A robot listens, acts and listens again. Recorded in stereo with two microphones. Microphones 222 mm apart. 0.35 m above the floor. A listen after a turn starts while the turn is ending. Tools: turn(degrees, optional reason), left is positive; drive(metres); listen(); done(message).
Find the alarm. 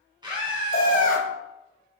turn(degrees=60, reason="The alarm: about 60° left or 120° left.")
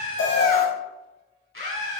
turn(degrees=45, reason="So it is at 45° left.")
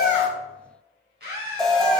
done("Found it: an alarm, straight ahead, 1 to 2 m away.")